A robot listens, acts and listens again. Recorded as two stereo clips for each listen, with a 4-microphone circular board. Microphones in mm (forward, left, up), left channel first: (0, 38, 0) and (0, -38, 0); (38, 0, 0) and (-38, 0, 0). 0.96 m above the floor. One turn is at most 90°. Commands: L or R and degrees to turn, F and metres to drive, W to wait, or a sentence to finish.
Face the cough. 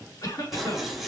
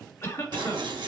L55
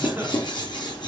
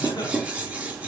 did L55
W
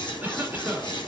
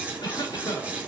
R20
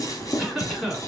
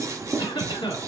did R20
Found it: a cough, straight ahead.